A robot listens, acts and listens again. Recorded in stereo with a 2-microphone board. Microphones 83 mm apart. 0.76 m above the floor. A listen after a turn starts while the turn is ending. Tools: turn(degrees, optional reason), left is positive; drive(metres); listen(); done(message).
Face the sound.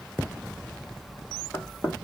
turn(degrees=25, reason="The knocking: about 25° left or 155° left.")
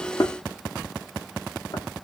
turn(degrees=130, reason="So it is at 130° left.")
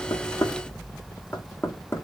turn(degrees=30, reason="The knocking is now 30° left.")
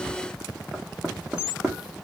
turn(degrees=-10, reason="The knocking is now 10° right.")
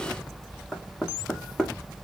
done("Found it: knocking, straight ahead.")